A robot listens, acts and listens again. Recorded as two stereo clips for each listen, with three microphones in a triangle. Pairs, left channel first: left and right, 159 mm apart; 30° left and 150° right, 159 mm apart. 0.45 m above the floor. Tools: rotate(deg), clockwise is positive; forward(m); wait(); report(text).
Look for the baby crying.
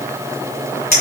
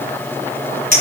wait()
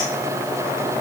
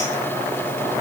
wait()
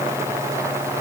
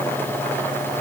report("I can't make out a baby crying to turn to.")